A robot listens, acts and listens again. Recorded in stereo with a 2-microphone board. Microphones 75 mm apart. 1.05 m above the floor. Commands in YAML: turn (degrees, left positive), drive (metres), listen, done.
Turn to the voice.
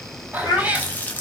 turn: 65
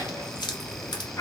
turn: 45
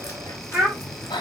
done: "Found it: a child speaking, straight ahead."